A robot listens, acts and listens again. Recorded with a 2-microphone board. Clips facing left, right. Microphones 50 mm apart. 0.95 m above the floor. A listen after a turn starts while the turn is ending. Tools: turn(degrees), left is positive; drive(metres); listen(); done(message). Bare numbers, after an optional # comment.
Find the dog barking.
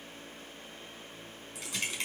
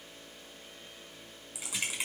listen()
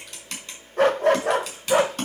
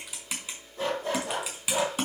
# The dog barking: about 65° left or 115° left.
turn(65)
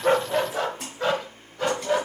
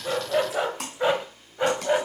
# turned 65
# So it is at 25° right.
turn(-25)
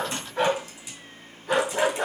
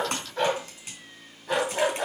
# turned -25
done("Facing the dog barking.")